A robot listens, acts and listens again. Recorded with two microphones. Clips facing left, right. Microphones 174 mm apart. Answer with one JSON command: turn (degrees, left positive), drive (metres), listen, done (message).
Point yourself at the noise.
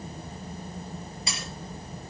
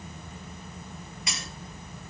{"turn": 30}
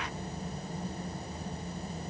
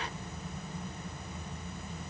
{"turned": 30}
{"listen": true}
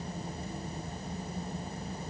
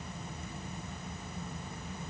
{"done": "I heard breaking glass, but can't make it out now. It was about straight ahead or 120° left."}